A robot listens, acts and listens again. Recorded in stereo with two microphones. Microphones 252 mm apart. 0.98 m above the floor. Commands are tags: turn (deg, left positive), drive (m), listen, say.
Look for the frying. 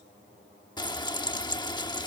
<turn deg="15"/>
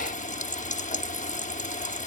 <turn deg="150"/>
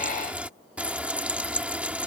<say>Facing the frying.</say>